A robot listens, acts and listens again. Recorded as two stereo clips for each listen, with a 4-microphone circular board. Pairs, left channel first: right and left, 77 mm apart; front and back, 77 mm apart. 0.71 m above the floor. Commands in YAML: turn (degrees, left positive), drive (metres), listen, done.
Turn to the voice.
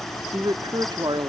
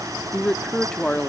turn: 80
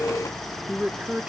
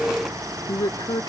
turn: 20
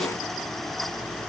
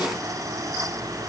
listen: true
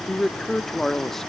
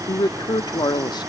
done: "Facing the man speaking, under 1 m away."